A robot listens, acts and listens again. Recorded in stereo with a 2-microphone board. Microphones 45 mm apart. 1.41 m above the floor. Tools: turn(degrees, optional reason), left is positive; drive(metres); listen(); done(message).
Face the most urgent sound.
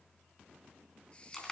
listen()
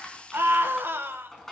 turn(degrees=-55, reason="The scream: about 55° right or 125° right.")
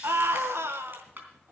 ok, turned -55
turn(degrees=-65, reason="So it is at 65° right.")
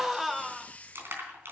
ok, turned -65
done("Facing the scream.")